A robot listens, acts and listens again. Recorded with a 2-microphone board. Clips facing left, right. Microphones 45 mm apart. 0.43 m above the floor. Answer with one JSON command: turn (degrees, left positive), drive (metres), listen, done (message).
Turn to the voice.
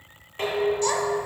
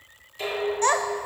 {"turn": -45}
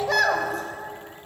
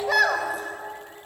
{"done": "Found it: a child speaking, straight ahead."}